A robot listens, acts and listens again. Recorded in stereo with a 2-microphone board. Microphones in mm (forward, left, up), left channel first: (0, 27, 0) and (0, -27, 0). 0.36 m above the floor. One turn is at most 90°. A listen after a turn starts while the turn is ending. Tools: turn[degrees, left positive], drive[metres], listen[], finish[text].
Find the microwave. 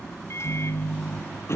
Thought: The microwave: about 60° left or 120° left.
Action: turn[60]
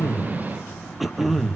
Action: listen[]
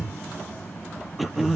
Action: listen[]
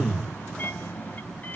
Thought: So it is at 40° left.
Action: turn[40]
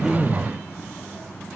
Action: listen[]
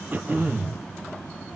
Action: listen[]
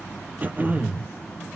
Action: finish[I heard a microwave from this way, but can't make it out now.]